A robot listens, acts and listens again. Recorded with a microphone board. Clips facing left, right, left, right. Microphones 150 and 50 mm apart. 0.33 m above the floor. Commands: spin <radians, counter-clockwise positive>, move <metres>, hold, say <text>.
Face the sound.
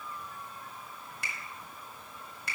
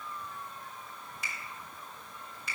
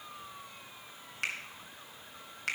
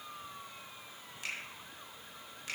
spin 1.22
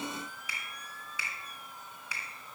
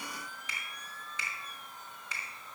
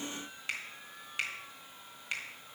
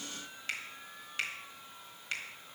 spin 0.17
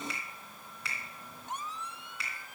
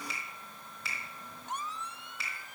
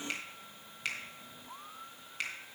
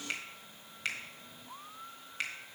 say Facing the finger snap.